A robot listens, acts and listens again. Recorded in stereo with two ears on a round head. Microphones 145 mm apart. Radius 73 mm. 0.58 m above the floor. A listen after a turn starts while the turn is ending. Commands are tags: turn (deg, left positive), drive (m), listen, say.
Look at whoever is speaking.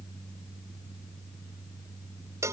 <listen/>
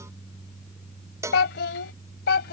<turn deg="75"/>
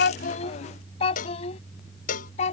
<turn deg="40"/>
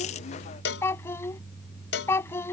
<turn deg="15"/>
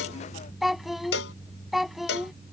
<say>Found it: a child speaking, straight ahead.</say>